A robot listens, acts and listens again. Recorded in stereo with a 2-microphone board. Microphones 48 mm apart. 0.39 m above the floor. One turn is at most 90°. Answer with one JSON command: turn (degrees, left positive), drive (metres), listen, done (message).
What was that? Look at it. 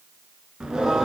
{"turn": -30}
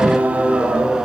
{"turn": -20}
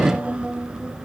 {"turn": -15}
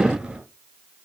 {"turn": -25}
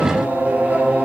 {"turn": -90}
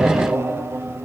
{"turn": -70}
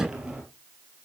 {"turn": -15}
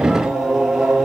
{"done": "Found it: singing, straight ahead."}